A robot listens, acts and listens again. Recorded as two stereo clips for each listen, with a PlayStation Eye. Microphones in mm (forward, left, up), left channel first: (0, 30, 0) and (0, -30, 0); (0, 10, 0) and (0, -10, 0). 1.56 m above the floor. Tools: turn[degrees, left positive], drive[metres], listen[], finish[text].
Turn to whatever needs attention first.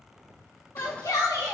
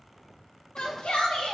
Action: turn[90]
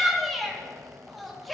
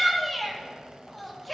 Action: finish[Found it: a shout, straight ahead.]